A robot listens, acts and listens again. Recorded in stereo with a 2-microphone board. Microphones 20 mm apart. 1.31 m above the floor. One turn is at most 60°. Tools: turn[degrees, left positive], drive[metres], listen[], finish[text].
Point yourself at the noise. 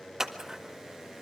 Thought: The scissors: about 25° right or 155° right.
Action: turn[-25]
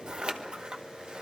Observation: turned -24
Thought: So it is at 130° right.
Action: turn[-60]
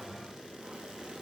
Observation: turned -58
Thought: Nothing new. It was at 70° right.
Action: turn[-60]
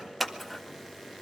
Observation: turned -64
Action: finish[Facing the scissors.]